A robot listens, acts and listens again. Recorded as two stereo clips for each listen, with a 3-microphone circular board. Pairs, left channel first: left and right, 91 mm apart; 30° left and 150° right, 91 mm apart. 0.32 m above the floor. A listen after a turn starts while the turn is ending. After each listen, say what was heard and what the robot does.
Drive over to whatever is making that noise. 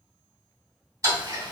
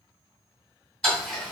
The ticking: 50° right. Turn 50° right.
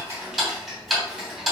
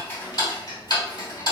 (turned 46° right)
Drive 1.0 m forward.
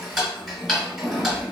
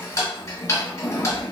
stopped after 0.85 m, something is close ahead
I am next to the ticking.